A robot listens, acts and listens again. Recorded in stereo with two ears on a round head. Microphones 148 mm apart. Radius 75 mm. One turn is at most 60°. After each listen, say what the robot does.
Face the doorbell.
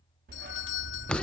Turn 60° left.
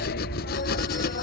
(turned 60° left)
Turn 30° left.
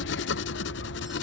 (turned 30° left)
Keep listening.
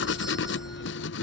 I heard a doorbell from this way, but can't make it out now.